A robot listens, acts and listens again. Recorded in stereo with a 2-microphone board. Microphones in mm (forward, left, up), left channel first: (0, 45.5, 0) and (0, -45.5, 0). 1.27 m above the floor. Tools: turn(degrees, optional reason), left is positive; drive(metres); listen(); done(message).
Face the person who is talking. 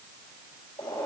listen()
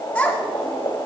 turn(degrees=30)
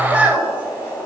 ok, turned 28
turn(degrees=-15, reason="So it is at 15° right.")
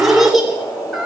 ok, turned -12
done("Facing the child speaking, 2 to 4 m away.")